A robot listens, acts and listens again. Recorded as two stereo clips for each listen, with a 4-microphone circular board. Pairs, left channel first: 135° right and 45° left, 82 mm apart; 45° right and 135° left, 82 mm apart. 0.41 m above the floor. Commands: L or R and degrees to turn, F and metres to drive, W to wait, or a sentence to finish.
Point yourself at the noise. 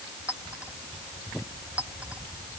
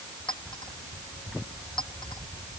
R30
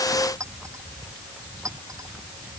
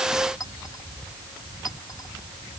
Facing the clink.